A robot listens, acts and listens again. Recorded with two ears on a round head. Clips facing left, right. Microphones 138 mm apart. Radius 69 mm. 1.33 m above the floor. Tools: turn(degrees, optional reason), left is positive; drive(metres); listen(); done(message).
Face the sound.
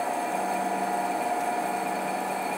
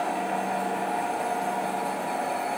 listen()
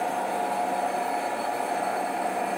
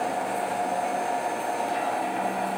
listen()
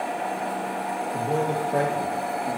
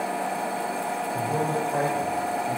turn(degrees=65, reason="The man speaking: about 65° left or 115° left.")
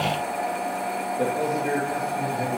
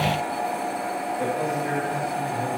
turn(degrees=40, reason="So it is at 40° left.")
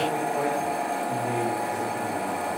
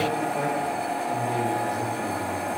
done("Found it: a man speaking, straight ahead, 2 to 4 m away.")